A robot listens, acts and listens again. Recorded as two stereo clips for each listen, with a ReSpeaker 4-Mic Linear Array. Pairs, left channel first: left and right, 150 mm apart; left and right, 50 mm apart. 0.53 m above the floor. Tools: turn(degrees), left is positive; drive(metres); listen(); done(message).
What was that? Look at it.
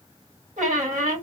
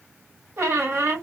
turn(degrees=-60)
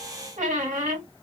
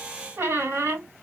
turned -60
turn(degrees=-60)
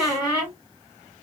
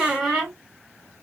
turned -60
done("Found it: a squeak, straight ahead, 2 to 4 m away.")